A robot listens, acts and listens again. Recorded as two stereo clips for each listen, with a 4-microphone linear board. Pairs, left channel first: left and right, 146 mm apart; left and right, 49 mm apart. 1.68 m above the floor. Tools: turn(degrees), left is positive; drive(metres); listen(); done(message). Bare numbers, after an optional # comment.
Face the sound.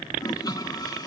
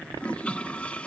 # The toilet flushing: about 25° left or 155° left.
turn(25)
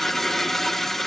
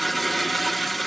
done("Facing the toilet flushing.")